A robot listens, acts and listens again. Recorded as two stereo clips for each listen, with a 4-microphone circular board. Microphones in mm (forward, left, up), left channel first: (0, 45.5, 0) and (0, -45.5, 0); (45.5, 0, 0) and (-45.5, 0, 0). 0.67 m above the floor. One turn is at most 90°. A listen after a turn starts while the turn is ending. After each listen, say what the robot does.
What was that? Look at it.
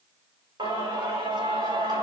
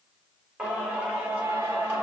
Turn 90° right.
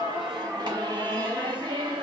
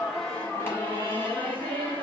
Turn 70° right.
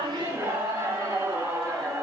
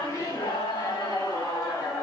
Turn 40° right.
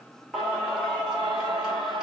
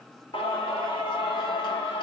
Found it: singing, straight ahead, 2 to 4 m away.